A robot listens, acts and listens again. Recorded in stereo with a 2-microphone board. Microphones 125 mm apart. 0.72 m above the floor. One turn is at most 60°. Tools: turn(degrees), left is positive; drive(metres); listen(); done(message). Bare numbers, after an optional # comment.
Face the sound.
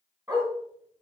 # The dog barking: about 30° right or 150° right.
turn(-30)
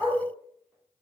# So it is at 10° right.
turn(-10)
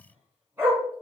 # The dog barking is now 20° right.
turn(-20)
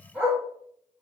done("Facing the dog barking.")